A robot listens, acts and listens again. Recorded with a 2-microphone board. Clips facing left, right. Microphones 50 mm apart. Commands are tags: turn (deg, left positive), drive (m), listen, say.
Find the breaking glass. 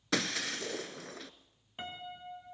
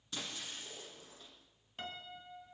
<turn deg="75"/>
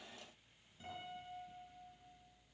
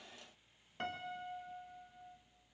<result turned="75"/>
<listen/>
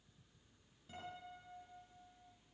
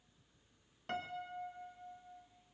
<say>I heard breaking glass, but can't make it out now. It was about straight ahead or 30° left.</say>